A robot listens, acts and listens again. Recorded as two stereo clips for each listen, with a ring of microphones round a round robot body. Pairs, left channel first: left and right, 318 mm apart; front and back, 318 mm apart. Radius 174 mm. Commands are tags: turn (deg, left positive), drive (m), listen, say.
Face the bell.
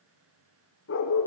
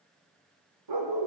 <listen/>
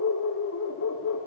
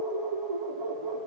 <listen/>
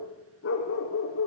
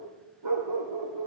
<say>I can't make out a bell, only a dog barking.</say>